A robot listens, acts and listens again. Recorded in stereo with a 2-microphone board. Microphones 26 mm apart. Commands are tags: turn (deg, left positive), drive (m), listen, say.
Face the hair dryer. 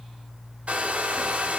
<turn deg="-55"/>
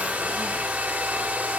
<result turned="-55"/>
<turn deg="-75"/>
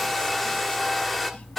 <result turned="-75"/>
<say>Facing the hair dryer.</say>